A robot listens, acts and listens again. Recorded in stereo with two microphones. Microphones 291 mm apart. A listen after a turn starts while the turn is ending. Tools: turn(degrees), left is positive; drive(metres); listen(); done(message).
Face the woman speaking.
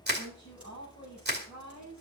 turn(degrees=35)
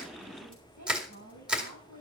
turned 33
turn(degrees=110)
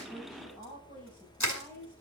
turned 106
done("Found it: a woman speaking, straight ahead, over 4 m away.")